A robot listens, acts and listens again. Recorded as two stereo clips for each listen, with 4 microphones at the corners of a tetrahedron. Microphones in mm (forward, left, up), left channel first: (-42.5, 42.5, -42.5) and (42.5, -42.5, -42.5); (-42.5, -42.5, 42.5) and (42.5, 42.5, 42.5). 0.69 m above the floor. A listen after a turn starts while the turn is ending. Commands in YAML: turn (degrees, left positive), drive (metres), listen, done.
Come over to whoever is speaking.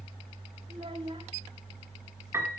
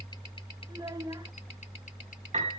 turn: -10
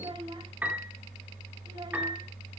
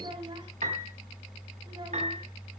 drive: 1.0
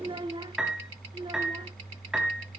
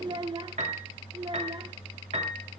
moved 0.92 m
drive: 1.0
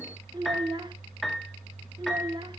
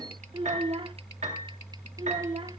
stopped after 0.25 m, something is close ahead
done: "I am next to the child speaking."